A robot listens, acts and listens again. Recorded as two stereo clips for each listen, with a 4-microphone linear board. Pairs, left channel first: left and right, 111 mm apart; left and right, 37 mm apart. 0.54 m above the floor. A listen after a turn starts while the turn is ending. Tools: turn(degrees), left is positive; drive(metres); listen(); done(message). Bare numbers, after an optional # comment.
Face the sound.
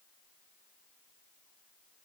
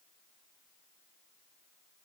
listen()
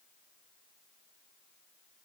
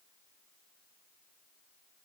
listen()
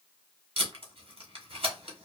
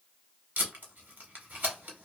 # The tape being pulled: about 60° right or 120° right.
turn(-60)
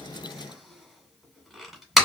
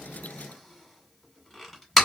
done("Facing the tape being pulled.")